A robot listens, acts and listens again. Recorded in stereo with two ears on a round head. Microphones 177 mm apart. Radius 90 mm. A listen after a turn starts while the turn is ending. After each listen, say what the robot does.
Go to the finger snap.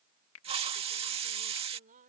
Turn 70° left.
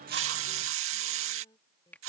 Turn 10° left.
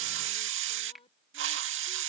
Drive 1.0 m forward.
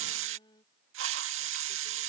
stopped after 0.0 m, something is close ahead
Keep listening.
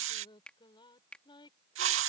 Something is in my way. I am facing the finger snap but have not reached it.